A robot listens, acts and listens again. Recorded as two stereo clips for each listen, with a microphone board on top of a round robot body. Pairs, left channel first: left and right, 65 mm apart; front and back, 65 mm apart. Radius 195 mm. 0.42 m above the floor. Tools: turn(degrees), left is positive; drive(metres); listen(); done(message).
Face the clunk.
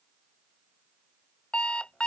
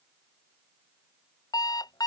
listen()
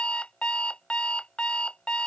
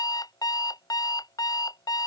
listen()
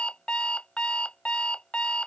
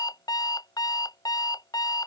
done("I can't make out a clunk to turn to.")